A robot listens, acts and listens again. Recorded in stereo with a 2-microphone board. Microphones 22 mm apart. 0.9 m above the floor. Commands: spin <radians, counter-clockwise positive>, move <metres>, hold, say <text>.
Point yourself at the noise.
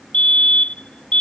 spin 1.22
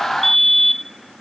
spin 0.17
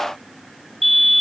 say Facing the fire alarm.